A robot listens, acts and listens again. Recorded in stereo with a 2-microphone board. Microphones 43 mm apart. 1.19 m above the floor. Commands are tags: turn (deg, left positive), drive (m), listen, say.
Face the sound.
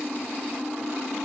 <listen/>
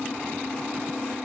<listen/>
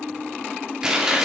<turn deg="-30"/>
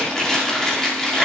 <turn deg="15"/>
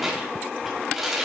<say>Found it: chewing, straight ahead, 2 to 4 m away.</say>